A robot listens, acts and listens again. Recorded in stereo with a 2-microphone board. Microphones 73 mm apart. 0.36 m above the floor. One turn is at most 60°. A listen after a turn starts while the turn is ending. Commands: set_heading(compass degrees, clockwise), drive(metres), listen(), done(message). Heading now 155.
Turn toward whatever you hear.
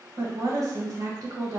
set_heading(215)
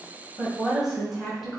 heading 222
done("Found it: a woman speaking, straight ahead.")